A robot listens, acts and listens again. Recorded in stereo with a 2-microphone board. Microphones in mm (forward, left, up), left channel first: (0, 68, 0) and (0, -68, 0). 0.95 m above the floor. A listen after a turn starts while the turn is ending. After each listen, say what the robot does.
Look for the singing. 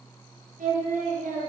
Turn 75° right.
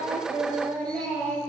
Found it: singing, straight ahead, over 4 m away.